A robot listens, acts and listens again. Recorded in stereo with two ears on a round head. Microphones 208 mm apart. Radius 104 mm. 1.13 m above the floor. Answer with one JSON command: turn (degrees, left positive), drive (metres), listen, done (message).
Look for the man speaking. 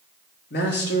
{"turn": 50}
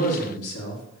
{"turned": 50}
{"turn": 75}
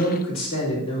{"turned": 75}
{"turn": 25}
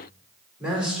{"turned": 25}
{"done": "Facing the man speaking."}